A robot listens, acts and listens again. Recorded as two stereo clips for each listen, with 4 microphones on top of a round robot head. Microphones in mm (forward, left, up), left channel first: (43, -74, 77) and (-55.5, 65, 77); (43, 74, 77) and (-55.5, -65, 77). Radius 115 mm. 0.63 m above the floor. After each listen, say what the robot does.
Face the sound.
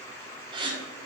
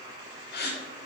Turn 65° left.
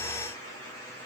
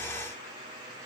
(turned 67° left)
Facing where the gasp came from. I can't hear it now.